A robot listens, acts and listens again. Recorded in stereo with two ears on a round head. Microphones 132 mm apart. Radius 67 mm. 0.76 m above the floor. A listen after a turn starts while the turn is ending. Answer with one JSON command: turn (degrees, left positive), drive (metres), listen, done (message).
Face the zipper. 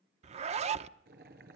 {"turn": -45}
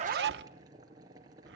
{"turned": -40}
{"turn": -95}
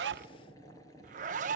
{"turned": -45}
{"turn": -50}
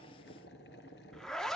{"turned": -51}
{"done": "Found it: a zipper, straight ahead, under 1 m away."}